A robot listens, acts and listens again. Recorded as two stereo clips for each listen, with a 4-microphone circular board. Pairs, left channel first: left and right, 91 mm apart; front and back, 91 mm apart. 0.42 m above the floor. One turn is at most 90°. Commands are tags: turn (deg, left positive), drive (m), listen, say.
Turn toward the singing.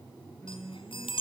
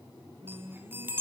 <turn deg="90"/>
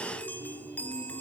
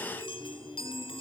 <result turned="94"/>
<turn deg="70"/>
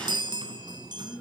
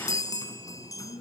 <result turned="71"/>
<turn deg="10"/>
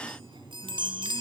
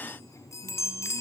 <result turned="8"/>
<listen/>
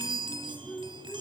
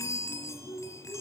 <turn deg="10"/>
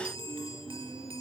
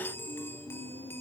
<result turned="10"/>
<say>Facing the singing, 2 to 4 m away.</say>